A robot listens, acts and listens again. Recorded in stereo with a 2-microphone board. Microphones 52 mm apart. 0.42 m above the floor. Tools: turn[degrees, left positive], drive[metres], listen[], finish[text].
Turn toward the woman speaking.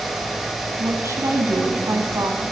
Thought: The woman speaking: about 65° right or 115° right.
Action: turn[-65]
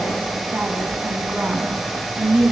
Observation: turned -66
Thought: So it is at 20° right.
Action: turn[-20]
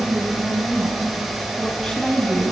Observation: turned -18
Thought: The woman speaking is now 10° left.
Action: turn[10]
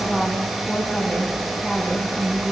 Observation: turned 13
Action: finish[Found it: a woman speaking, straight ahead.]